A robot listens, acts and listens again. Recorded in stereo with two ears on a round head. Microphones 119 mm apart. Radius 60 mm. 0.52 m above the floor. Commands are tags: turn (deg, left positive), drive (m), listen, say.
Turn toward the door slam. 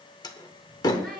<turn deg="30"/>
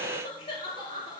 <listen/>
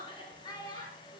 <say>I heard a door slam, but can't make it out now. It was about straight ahead or 120° left.</say>